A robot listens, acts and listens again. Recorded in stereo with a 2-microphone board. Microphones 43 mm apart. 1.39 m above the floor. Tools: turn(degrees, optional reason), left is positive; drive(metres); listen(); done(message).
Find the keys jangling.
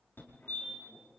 listen()
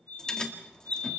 turn(degrees=20, reason="The keys jangling: about 20° left or 160° left.")
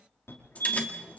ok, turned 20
turn(degrees=145, reason="So it is at 145° left.")
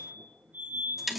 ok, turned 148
done("Found it: keys jangling, straight ahead, 2 to 4 m away.")